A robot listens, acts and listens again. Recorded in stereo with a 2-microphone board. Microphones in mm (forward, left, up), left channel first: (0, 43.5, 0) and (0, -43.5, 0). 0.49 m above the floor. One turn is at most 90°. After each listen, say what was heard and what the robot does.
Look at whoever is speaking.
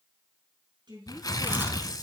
The woman speaking: about 60° right or 120° right. Turn 60° right.
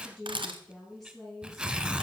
Facing the woman speaking, over 4 m away.